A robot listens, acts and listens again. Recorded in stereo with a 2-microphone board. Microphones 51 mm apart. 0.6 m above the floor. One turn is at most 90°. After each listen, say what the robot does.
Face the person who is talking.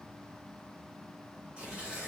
Keep listening.
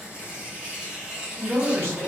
Turn 65° right.
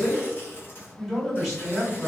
Facing the man speaking, 1 to 2 m away.